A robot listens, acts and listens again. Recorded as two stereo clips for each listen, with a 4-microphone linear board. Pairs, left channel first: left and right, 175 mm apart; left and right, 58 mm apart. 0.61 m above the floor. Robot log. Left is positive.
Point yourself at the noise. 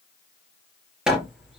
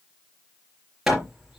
cmd yaw -30
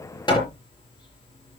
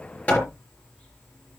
note: So it is at 25° left.
cmd yaw +25
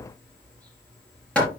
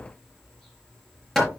end: Found it: hammering, straight ahead.